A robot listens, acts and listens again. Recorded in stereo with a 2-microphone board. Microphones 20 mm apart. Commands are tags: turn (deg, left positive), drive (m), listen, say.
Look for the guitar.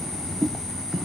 <listen/>
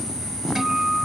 <turn deg="-35"/>
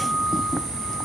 <turn deg="-110"/>
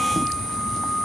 <turn deg="20"/>
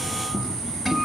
<say>Facing the guitar.</say>